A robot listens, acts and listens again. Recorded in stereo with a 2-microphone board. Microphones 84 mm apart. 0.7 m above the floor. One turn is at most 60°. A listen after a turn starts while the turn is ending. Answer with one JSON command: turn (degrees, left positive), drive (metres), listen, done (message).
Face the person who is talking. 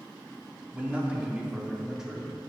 {"turn": -30}
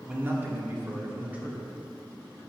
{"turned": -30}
{"turn": -15}
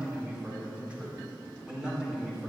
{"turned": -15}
{"turn": -30}
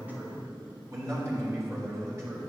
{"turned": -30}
{"turn": -60}
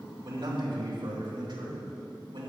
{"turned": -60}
{"turn": -60}
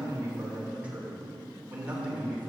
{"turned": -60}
{"turn": -20}
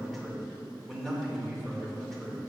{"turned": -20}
{"done": "Found it: a man speaking, straight ahead."}